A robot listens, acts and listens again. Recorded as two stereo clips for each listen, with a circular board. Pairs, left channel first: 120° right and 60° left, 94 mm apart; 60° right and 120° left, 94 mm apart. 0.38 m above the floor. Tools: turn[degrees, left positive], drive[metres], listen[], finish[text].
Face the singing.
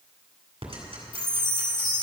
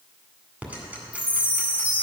Action: listen[]
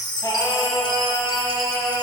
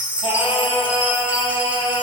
Thought: The singing: 80° right.
Action: turn[-80]
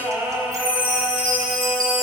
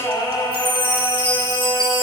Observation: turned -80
Thought: The singing is now 25° right.
Action: turn[-25]
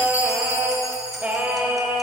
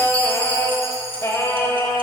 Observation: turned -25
Thought: The singing is now 10° right.
Action: turn[-10]
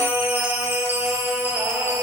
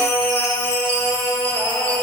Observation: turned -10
Action: finish[Found it: singing, straight ahead, 1 to 2 m away.]